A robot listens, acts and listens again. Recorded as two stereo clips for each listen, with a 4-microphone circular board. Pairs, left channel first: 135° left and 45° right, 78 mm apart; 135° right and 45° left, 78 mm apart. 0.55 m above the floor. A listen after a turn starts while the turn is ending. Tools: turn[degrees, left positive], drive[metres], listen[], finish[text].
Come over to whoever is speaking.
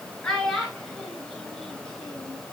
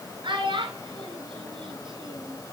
Thought: The child speaking: 55° left.
Action: turn[55]
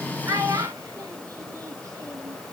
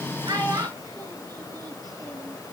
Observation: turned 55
Action: drive[1.0]
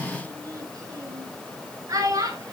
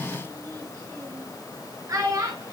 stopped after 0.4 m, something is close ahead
Action: finish[Something is in my way. I am facing the child speaking but have not reached it.]